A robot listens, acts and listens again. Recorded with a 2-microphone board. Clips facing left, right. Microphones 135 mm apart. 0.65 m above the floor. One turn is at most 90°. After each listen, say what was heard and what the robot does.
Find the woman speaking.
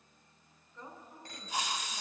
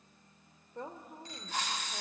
The woman speaking: about 60° right or 120° right. Turn 60° right.
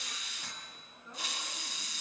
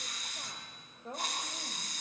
So it is at 70° right. Turn 70° right.
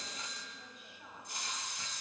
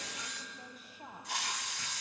The woman speaking is now 40° right. Turn 40° right.
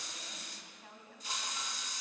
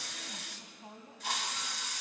The woman speaking is now 25° right. Turn 25° right.
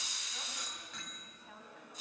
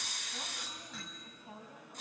The woman speaking is now 15° right. Turn 15° right.
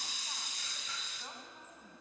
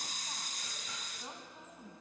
Found it: a woman speaking, straight ahead.